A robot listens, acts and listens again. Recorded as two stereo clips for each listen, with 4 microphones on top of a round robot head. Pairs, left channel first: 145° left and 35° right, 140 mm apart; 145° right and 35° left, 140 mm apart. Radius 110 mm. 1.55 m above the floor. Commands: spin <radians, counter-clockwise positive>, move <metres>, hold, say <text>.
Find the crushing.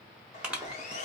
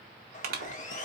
spin 0.87
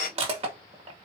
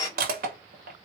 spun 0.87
spin 0.26
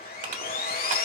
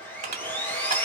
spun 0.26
say Found it: crushing, straight ahead.